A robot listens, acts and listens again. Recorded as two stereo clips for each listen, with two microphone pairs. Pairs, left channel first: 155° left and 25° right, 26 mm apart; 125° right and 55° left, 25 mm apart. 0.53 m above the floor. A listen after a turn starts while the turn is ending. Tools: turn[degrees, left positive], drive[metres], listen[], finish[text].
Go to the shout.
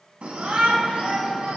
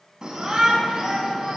Thought: The shout: 10° left.
Action: turn[10]
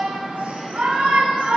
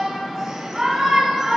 Action: drive[1.0]
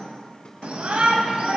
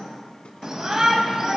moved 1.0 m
Action: drive[1.0]
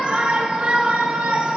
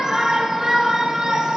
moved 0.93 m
Action: drive[1.0]
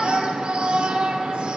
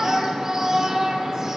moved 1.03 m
Action: drive[1.0]
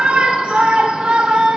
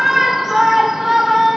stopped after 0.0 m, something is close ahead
Thought: The shout is now 10° right.
Action: turn[-10]
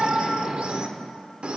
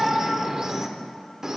Action: finish[I am next to the shout.]